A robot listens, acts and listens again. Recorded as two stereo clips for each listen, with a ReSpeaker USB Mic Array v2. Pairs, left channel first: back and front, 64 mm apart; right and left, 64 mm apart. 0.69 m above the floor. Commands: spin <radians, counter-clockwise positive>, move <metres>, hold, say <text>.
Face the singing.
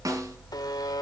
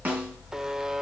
hold
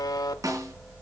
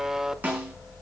hold
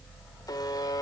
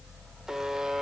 say I can't make out singing, only a buzzer and a snare drum.